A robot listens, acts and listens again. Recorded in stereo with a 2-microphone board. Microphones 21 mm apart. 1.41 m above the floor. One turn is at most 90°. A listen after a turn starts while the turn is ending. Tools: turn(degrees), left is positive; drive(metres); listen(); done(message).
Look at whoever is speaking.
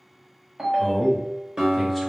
turn(degrees=30)
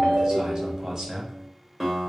turn(degrees=-30)
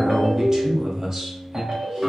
turn(degrees=-20)
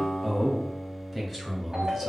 done("Found it: a man speaking, straight ahead.")